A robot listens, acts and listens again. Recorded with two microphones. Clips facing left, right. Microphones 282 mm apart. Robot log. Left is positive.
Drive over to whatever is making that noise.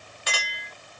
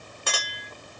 note: The clink: about 55° right or 125° right.
cmd yaw -55
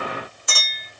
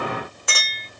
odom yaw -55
note: So it is at 70° right.
cmd yaw -70
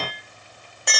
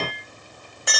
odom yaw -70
cmd fwd 1.0
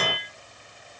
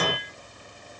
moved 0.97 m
cmd fwd 1.0
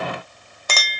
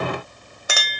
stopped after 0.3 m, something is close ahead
note: The clink is now 10° right.
cmd yaw -10
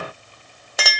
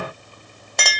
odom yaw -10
end: Arrived at the clink, straight ahead.